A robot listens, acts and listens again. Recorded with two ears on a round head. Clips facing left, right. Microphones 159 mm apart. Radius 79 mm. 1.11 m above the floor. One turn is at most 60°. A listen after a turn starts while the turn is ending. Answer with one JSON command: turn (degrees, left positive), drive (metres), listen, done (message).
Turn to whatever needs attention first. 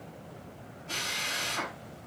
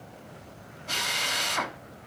{"listen": true}
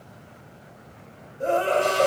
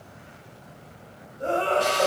{"turn": 15}
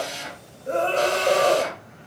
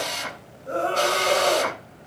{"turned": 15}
{"turn": 60}
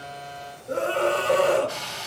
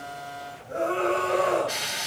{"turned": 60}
{"turn": 60}
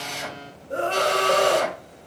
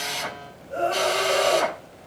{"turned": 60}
{"turn": 60}
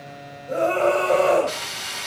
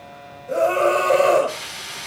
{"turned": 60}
{"turn": -10}
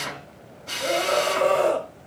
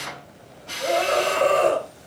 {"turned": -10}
{"done": "Found it: a scream, straight ahead, over 4 m away."}